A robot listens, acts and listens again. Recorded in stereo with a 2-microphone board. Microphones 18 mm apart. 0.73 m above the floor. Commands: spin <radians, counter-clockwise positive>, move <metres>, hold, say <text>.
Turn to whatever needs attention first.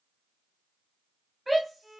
spin 0.52
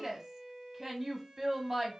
spin -0.35
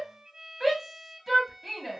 say Found it: a shout, straight ahead.